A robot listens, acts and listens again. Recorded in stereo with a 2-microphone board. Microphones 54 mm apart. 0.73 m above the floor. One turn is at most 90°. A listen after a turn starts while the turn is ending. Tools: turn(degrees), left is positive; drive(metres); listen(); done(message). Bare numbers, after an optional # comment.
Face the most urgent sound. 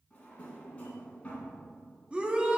# The shout: about 20° right or 160° right.
turn(-20)
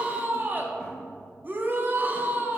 # So it is at 140° right.
turn(-90)
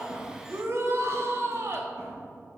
# The shout is now 70° right.
turn(-70)
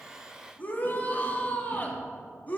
# The shout is now 30° left.
turn(30)
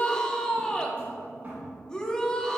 # The shout is now 15° left.
turn(15)
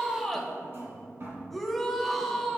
done("Facing the shout, under 1 m away.")